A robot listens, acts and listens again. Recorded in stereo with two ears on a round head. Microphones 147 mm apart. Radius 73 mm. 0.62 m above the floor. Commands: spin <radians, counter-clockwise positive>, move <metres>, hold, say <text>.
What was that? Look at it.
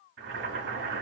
spin -1.57
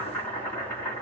spin 0.17
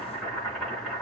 say Found it: boiling, straight ahead, 2 to 4 m away.